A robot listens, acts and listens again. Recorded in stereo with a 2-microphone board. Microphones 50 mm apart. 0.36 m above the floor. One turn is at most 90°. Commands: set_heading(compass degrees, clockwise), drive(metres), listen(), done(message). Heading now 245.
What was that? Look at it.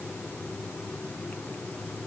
listen()
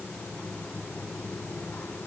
listen()
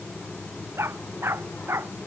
set_heading(305)
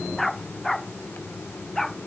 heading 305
done("Found it: a dog barking, straight ahead.")